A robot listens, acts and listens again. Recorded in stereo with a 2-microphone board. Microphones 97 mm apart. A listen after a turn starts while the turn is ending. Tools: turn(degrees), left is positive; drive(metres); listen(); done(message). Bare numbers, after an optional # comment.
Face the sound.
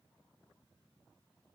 listen()
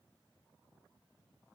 listen()
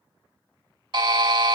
# The buzzer: about 50° right or 130° right.
turn(-50)
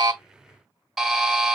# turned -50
done("Found it: a buzzer, straight ahead, 1 to 2 m away.")